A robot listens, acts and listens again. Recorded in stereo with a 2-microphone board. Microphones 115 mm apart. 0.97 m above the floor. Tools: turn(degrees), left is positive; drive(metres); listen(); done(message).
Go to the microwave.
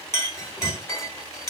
turn(degrees=-30)
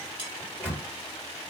turn(degrees=15)
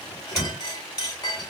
drive(metres=1.0)
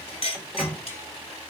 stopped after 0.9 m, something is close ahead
done("I am next to the microwave.")